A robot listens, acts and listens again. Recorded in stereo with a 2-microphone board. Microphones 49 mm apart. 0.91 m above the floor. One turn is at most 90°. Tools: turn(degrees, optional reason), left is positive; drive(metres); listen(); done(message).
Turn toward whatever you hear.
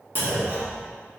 turn(degrees=-45, reason="The clunk: about 45° right or 135° right.")
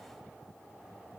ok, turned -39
listen()
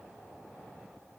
done("I heard a clunk, but can't make it out now. It was about 5° right or 95° right.")